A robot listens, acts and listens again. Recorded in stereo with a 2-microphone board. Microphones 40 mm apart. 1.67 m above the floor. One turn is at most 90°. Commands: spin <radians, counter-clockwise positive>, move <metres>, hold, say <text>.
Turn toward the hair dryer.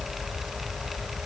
hold
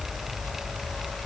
hold
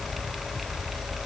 say I can't make out a hair dryer.